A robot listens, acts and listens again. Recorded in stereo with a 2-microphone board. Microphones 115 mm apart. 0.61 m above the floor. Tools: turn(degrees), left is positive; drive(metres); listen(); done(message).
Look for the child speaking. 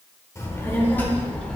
turn(degrees=30)
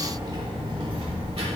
turn(degrees=-60)
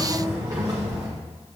turn(degrees=-40)
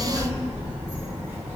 turn(degrees=-15)
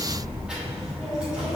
done("Found it: a child speaking, straight ahead.")